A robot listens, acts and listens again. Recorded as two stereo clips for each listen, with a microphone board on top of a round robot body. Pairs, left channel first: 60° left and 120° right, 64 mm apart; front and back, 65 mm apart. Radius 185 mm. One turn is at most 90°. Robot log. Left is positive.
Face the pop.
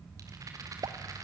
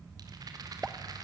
note: The pop: 100° right.
cmd yaw -90
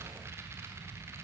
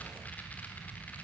note: Nothing new. It was at 10° right.
cmd yaw -10
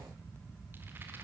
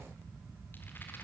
end: I heard a pop from this way, but can't make it out now.